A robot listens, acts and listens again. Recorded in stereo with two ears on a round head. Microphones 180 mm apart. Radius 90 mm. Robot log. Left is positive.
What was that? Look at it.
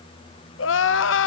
note: The crying: about 70° left or 110° left.
cmd yaw +70
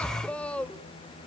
end: Facing the crying, under 1 m away.